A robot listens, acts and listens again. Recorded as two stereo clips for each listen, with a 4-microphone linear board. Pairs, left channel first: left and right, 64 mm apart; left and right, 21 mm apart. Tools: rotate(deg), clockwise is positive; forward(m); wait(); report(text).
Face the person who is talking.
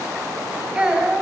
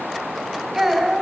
rotate(15)
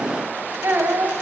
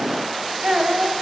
rotate(150)
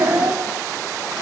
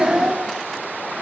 rotate(45)
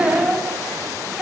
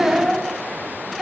rotate(15)
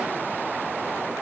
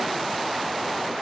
wait()
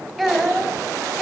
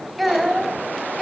report("Facing the child speaking, over 4 m away.")